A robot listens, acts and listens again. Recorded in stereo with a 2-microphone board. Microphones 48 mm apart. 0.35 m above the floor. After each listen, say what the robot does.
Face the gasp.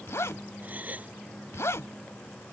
Turn 30° right.
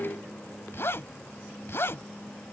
Keep listening.
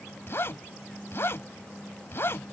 I heard a gasp, but can't make it out now. It was about straight ahead or 120° right.